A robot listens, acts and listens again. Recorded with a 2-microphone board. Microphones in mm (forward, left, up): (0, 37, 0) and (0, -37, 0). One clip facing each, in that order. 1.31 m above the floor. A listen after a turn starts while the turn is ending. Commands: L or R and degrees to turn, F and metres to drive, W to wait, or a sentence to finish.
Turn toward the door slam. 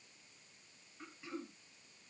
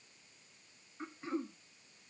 W
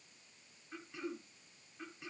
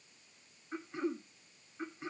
W
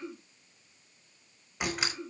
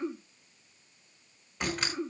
L30
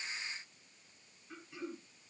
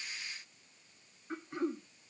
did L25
W
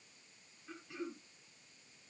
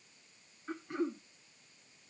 I heard a door slam, but can't make it out now. It was about 15° right or 145° left.